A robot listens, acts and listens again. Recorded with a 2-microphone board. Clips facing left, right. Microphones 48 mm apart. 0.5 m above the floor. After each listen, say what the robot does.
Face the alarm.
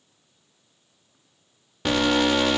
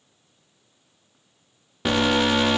Turn 30° right.
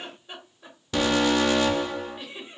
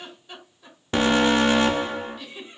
Turn 140° right.
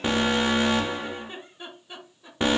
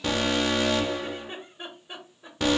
Turn 25° left.
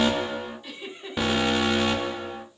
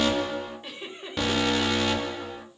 Turn 15° left.
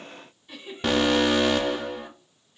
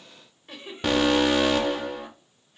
Found it: an alarm, straight ahead.